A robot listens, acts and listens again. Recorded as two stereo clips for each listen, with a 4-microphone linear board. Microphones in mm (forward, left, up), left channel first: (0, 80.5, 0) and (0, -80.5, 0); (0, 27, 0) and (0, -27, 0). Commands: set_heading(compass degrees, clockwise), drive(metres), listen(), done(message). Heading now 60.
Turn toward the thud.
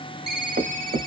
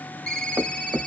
set_heading(135)
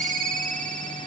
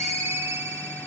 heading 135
listen()
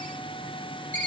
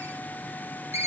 done("I heard a thud, but can't make it out now. It was about straight ahead or 30° right.")